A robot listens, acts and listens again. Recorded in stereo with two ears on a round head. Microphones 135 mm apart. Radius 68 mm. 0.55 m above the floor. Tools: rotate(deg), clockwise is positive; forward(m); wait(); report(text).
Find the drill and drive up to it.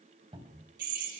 rotate(60)
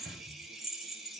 forward(1.0)
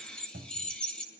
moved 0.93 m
forward(1.0)
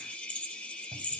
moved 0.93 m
rotate(-10)
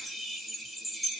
forward(1.0)
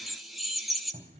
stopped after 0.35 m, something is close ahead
report("Arrived at the drill, straight ahead.")